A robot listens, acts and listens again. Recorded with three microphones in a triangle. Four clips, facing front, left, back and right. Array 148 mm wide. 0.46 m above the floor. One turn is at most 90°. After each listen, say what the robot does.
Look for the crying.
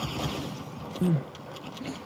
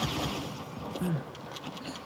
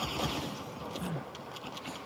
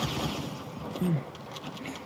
Turn 10° right.
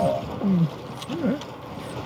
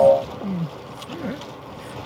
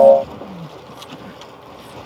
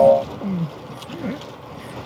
Facing the crying.